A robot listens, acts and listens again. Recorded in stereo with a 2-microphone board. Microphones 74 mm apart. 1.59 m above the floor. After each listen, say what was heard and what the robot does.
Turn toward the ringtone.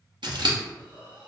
Keep listening.
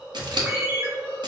The ringtone: about 20° right or 160° right. Turn 20° right.
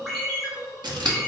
Found it: a ringtone, straight ahead, 1 to 2 m away.